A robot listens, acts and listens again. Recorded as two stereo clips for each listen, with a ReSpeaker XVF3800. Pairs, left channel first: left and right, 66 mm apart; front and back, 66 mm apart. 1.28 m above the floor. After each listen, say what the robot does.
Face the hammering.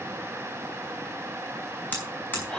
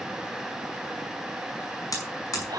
Turn 30° left.
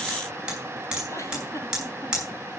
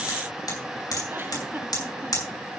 Turn 10° right.
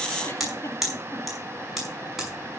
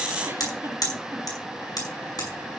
Facing the hammering.